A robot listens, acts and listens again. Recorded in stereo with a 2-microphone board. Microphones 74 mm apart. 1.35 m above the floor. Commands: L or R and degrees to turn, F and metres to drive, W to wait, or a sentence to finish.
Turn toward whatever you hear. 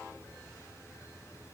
W
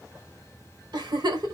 R70
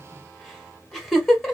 Facing the giggle.